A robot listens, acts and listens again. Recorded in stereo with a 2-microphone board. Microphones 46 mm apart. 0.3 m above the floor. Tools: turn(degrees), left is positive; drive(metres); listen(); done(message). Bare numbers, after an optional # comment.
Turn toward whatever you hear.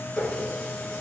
turn(30)
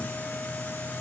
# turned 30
listen()
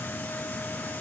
listen()
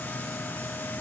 done("I heard a running tap, but can't make it out now. It was about 15° right or 135° left.")